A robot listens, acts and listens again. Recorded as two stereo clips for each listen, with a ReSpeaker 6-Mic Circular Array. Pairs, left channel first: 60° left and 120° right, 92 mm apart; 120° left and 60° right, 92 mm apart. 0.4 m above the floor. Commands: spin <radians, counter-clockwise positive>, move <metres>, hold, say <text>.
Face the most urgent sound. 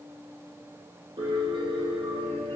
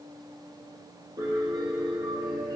hold
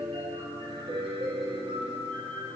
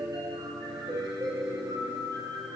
hold
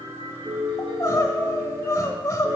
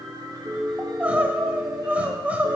spin 0.26
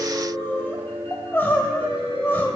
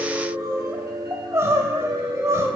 say Found it: crying, straight ahead, 1 to 2 m away.